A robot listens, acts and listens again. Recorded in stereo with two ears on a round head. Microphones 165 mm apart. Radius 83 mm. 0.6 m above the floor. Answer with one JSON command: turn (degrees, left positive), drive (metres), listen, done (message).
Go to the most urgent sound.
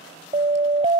{"turn": -30}
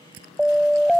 {"drive": 1.0}
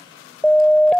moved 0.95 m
{"drive": 1.0}
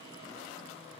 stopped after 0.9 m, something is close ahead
{"listen": true}
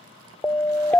{"turn": 10}
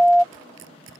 {"done": "I am next to the siren."}